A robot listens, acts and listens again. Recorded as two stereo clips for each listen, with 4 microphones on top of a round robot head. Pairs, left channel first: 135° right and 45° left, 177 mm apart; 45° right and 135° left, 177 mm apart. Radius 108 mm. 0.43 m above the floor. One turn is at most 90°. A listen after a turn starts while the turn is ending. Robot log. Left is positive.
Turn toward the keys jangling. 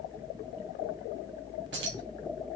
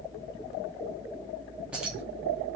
note: The keys jangling: 50° left.
cmd yaw +50
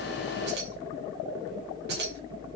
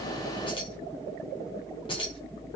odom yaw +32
note: The keys jangling is now 20° left.
cmd yaw +20
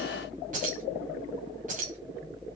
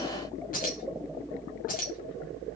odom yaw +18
end: Found it: keys jangling, straight ahead.